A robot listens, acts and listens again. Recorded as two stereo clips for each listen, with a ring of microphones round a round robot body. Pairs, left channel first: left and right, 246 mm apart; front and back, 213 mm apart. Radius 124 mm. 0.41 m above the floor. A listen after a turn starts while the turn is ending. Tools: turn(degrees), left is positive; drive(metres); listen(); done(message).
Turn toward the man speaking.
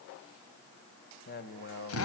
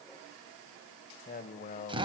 turn(degrees=50)
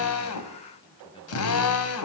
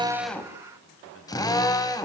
listen()
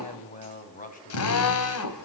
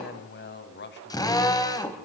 turn(degrees=30)
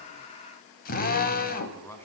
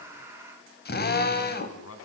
turn(degrees=10)
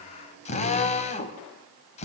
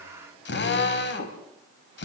listen()
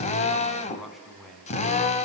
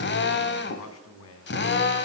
done("Found it: a man speaking, straight ahead, over 4 m away.")